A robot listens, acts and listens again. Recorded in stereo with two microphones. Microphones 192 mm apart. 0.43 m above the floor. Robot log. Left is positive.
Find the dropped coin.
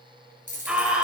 note: The dropped coin: about 40° left or 140° left.
cmd yaw +40
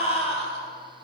cmd idle
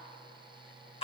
end: I heard a dropped coin, but can't make it out now. It was about straight ahead or 100° left.